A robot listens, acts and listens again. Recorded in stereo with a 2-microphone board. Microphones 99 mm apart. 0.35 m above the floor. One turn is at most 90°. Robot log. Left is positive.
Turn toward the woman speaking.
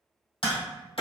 cmd idle
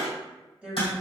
cmd yaw -30
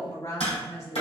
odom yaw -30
note: So it is at 35° left.
cmd yaw +35
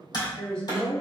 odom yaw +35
note: The woman speaking is now 10° left.
cmd yaw +10
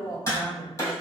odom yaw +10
note: The woman speaking is now 10° left.
cmd yaw +10
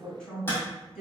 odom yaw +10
end: Facing the woman speaking.